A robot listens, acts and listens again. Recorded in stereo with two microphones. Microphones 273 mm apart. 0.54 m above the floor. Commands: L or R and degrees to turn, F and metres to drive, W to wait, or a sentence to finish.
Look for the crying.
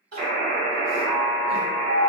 R65
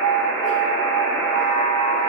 W
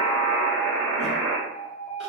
W
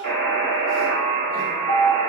I heard crying, but can't make it out now. It was about straight ahead or 50° right.